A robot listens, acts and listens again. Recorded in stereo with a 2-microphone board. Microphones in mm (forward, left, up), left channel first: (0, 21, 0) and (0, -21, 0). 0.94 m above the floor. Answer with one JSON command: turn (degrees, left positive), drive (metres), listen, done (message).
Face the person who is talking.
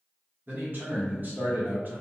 {"turn": -50}
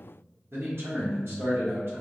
{"turn": -75}
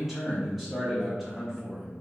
{"done": "Facing the man speaking."}